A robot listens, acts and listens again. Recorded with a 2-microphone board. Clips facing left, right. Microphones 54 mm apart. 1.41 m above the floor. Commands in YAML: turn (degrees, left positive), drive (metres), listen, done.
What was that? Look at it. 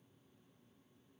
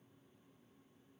listen: true
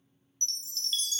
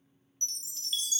turn: -15
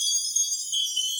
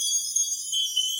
turn: -150
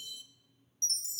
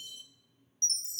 turn: -45
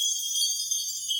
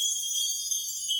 turn: -20
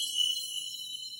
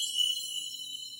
done: "Facing the chime."